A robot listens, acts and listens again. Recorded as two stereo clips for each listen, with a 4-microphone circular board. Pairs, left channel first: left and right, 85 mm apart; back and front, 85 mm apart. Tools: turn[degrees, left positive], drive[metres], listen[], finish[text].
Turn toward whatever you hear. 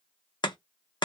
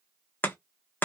Thought: The chopping: 115° left.
Action: turn[115]
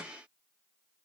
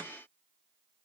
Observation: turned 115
Action: listen[]
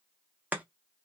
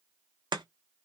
Thought: The chopping is now 20° right.
Action: turn[-20]
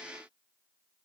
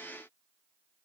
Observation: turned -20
Action: listen[]
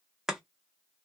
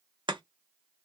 Action: finish[Found it: chopping, straight ahead, under 1 m away.]